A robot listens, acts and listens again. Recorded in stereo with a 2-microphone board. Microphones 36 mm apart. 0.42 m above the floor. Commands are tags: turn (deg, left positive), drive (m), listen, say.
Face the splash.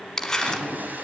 <turn deg="-60"/>
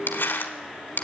<listen/>
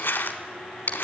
<say>I heard a splash, but can't make it out now. It was about straight ahead or 60° right.</say>